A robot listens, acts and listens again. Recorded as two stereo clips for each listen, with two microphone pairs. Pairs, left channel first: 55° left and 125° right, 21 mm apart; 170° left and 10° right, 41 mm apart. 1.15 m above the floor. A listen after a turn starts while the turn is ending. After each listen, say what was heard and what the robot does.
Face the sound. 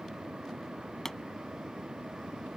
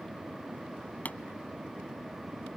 The pop: 125° left. Turn 125° left.
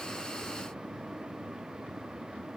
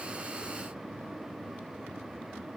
Facing where the pop came from. I can't hear it now.